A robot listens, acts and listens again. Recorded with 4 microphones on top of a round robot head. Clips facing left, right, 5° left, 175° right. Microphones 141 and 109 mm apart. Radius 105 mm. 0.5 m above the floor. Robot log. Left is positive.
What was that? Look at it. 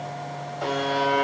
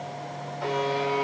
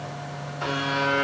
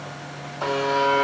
note: The buzzer: 130° left.
cmd yaw +130
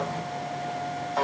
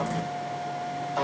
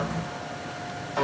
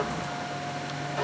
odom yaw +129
end: Found it: a buzzer, straight ahead.